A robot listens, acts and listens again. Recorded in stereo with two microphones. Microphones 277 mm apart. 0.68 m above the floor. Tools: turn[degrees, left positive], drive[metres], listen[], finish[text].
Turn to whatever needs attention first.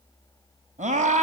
Thought: The scream: about 25° right or 155° right.
Action: turn[-25]
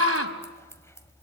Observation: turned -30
Thought: So it is at 125° right.
Action: turn[-125]
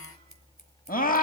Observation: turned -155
Thought: The scream is now 30° left.
Action: turn[30]
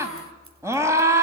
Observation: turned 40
Thought: The scream is now 10° right.
Action: turn[-10]
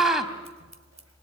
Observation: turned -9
Action: finish[Found it: a scream, straight ahead.]